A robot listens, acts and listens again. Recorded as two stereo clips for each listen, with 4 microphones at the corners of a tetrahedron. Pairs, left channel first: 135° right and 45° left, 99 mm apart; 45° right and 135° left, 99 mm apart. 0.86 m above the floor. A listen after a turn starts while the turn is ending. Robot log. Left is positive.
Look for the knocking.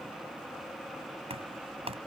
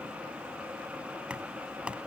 note: The knocking: 55° left.
cmd yaw +55
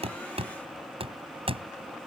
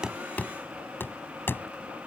note: The knocking is now 25° left.
cmd yaw +25
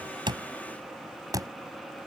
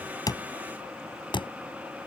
end: Found it: knocking, straight ahead.